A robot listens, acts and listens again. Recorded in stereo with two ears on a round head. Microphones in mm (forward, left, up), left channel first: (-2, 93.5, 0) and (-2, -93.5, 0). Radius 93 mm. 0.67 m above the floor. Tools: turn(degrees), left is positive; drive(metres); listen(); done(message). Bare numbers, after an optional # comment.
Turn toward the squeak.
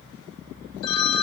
listen()
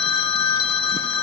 listen()
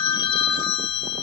done("I can't make out a squeak to turn to.")